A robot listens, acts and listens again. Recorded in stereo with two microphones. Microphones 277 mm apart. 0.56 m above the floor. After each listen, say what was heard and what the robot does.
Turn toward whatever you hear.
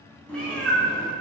Turn 30° left.
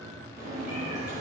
So it is at 25° right. Turn 25° right.
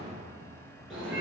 Found it: a cat meowing, straight ahead, 2 to 4 m away.